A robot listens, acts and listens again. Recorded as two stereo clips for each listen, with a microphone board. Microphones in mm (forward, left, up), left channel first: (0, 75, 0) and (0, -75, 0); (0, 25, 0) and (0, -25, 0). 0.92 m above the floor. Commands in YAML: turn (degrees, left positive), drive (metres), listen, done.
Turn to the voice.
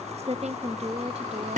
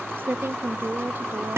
turn: -45
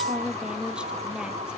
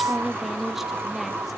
done: "Found it: a woman speaking, straight ahead, 1 to 2 m away."